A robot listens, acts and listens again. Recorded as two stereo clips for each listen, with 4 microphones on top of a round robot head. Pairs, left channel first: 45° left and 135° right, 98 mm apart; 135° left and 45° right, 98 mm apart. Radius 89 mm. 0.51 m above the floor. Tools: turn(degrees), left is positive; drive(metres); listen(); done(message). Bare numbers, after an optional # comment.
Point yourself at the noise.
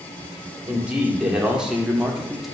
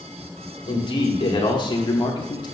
# The man speaking: 135° left.
turn(135)
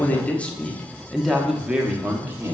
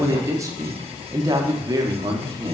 # The man speaking is now 80° right.
turn(-80)
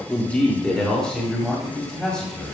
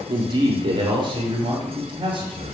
# The man speaking is now 40° right.
turn(-40)
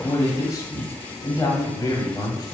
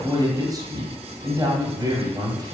done("Found it: a man speaking, straight ahead, 1 to 2 m away.")